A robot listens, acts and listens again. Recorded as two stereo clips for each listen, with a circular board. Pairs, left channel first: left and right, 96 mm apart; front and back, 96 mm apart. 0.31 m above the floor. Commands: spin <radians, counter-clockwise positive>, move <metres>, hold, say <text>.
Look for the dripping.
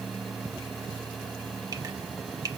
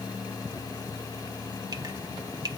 spin -2.36
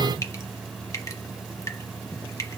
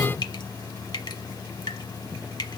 spin 0.61
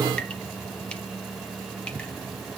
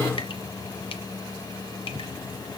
hold
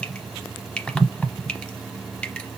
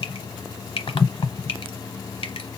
spin 0.26
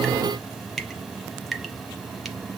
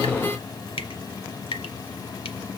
say Found it: dripping, straight ahead.